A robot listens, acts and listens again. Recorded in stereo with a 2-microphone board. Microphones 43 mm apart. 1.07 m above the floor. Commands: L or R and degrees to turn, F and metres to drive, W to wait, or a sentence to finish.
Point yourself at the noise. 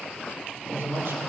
R90
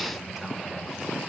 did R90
R10
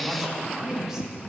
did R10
R10
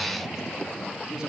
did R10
R15
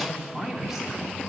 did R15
R10
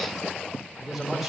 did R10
Found it: a man speaking, straight ahead.